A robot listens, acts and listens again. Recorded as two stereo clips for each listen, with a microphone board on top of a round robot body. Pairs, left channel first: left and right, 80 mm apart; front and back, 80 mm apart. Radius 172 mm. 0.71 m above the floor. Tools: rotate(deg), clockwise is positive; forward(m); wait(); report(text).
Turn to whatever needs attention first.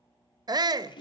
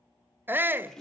rotate(120)
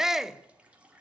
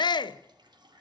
report("Facing the shout, under 1 m away.")